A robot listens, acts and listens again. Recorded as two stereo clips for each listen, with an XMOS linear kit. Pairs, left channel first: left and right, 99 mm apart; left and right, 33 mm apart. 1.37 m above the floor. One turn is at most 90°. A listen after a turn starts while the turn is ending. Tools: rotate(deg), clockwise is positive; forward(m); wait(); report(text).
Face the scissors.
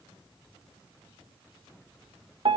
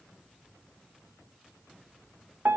wait()
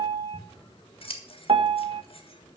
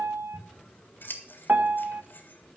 rotate(-70)
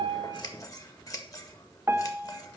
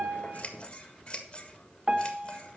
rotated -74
rotate(-35)
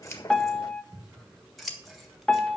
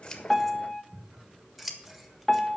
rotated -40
report("Found it: scissors, straight ahead.")